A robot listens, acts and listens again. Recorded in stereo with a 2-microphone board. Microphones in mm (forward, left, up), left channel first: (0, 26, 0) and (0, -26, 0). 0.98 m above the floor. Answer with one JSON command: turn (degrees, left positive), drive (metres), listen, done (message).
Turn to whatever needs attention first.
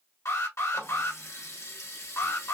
{"turn": 90}
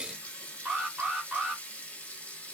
{"turn": -15}
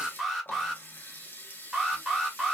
{"done": "Facing the alarm."}